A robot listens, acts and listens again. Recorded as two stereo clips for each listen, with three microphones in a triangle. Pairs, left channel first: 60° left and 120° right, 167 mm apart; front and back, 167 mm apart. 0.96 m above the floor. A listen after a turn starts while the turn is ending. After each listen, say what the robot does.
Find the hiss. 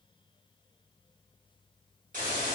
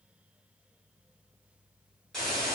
Turn 85° right.
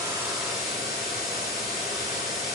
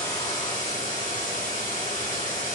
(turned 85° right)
Turn 30° right.
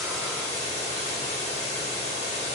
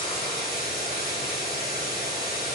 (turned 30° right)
Turn 15° left.
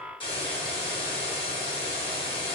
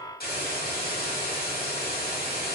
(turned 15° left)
Found it: a hiss, straight ahead.